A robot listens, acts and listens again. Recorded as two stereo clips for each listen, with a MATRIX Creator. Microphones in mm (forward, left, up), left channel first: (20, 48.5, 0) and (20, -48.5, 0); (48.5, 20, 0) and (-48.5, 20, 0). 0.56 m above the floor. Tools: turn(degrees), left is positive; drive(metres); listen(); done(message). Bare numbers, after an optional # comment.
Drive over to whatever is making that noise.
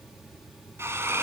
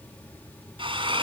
# The drill: 150° right.
turn(-150)
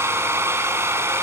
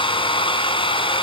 # The drill is now 25° right.
turn(-25)
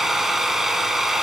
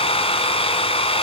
drive(1.0)
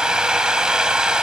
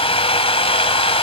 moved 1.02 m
drive(1.0)
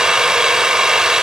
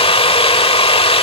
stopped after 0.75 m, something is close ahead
done("Arrived at the drill, straight ahead.")